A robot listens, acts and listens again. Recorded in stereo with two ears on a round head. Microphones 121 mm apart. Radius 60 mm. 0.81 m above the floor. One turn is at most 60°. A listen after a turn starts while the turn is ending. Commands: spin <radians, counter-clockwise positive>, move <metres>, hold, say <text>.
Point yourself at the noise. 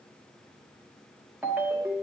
spin -0.52
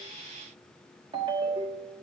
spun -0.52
spin -1.05
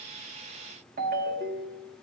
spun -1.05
spin -1.05
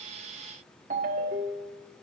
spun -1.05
spin -1.05
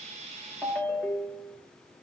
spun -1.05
spin 0.17
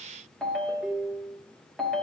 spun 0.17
say Found it: a ringtone, straight ahead, 1 to 2 m away.